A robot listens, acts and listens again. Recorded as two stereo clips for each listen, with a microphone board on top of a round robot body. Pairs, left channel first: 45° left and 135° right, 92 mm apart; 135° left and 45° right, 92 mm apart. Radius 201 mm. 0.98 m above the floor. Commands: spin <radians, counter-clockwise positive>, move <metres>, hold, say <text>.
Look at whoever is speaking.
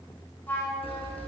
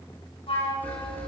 hold
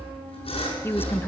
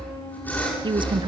spin -0.35
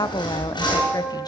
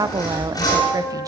say Found it: a woman speaking, straight ahead, 1 to 2 m away.